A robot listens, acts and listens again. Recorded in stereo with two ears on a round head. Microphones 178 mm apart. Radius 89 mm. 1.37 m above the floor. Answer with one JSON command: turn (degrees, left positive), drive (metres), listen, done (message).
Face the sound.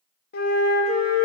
{"turn": 50}
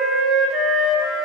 {"done": "Found it: a flute, straight ahead."}